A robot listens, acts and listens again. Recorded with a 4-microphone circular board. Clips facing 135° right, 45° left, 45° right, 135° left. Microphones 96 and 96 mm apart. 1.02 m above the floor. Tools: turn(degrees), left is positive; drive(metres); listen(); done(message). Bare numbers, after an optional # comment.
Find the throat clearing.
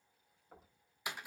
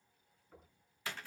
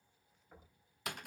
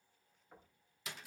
listen()
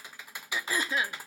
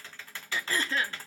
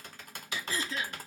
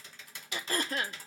# The throat clearing: 150° left.
turn(150)
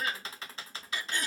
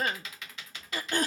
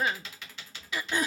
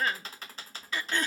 # The throat clearing is now 30° left.
turn(30)
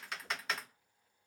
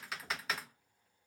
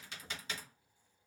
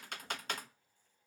listen()
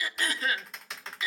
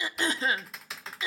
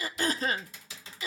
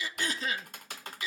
# The throat clearing is now 10° right.
turn(-10)
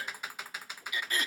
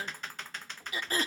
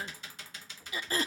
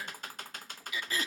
done("Found it: throat clearing, straight ahead.")